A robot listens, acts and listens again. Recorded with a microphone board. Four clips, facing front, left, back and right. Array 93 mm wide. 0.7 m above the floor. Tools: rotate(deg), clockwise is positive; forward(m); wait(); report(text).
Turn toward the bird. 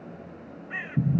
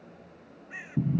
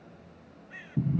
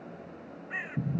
rotate(35)
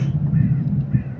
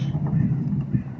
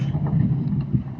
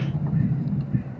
wait()
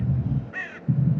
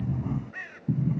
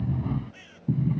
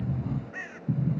rotate(10)
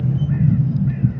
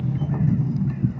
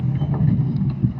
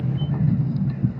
wait()
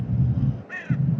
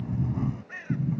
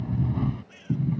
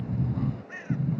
report("Facing the bird.")